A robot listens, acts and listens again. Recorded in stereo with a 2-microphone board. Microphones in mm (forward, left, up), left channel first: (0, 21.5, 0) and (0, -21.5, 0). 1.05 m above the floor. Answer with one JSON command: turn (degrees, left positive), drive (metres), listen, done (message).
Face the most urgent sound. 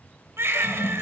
{"turn": -90}
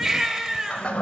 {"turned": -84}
{"turn": -15}
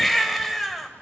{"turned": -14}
{"done": "Found it: a baby crying, straight ahead."}